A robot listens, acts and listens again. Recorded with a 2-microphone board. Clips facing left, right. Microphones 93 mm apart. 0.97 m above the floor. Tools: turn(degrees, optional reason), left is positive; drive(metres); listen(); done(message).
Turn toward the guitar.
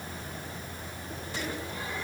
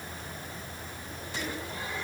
listen()
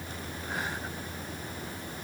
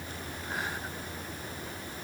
listen()
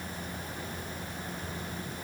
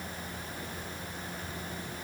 done("I can't make out a guitar.")